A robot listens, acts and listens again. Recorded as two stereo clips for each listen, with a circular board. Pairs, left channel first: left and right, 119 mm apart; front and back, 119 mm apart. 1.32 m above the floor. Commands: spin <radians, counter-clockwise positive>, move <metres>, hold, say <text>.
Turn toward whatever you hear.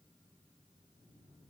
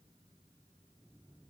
hold
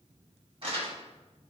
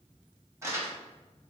spin -2.09
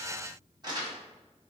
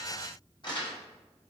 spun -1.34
spin -0.70
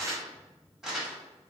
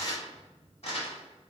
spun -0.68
say Facing the crumpling, 1 to 2 m away.